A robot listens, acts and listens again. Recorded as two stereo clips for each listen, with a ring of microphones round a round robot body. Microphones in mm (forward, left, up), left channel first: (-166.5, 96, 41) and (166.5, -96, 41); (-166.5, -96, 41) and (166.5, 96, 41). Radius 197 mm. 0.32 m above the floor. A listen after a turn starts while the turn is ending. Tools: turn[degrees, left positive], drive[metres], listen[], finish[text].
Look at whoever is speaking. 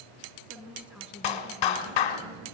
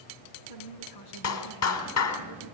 Thought: The woman speaking: 115° right.
Action: turn[-115]
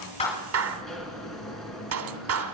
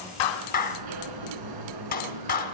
Action: listen[]
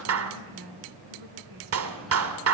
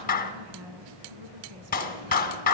Action: finish[Found it: a woman speaking, straight ahead.]